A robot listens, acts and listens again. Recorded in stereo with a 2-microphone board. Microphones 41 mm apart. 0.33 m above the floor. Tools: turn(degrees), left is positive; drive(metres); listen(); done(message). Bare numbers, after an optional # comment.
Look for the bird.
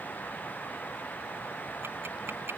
listen()
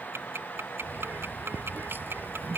# The bird: about 60° right or 120° right.
turn(-60)
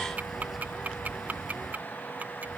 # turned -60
done("Found it: a bird, straight ahead.")